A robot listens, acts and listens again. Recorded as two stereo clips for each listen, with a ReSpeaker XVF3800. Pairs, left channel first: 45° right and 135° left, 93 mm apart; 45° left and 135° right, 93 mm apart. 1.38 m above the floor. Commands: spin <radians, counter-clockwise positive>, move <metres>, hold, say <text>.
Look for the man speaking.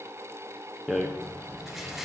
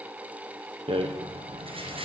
hold
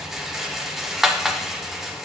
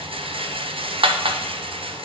hold
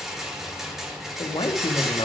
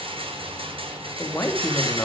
spin -0.26
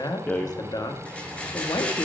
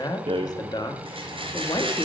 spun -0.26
say Facing the man speaking, under 1 m away.